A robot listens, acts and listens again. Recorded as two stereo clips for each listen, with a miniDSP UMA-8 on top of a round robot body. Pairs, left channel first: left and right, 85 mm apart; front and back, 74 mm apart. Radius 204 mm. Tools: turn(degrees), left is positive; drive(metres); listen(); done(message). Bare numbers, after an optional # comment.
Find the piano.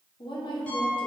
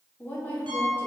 # The piano: 170° left.
turn(170)
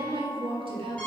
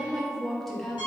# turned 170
# The piano is now 15° left.
turn(15)
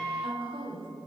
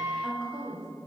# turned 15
done("Facing the piano.")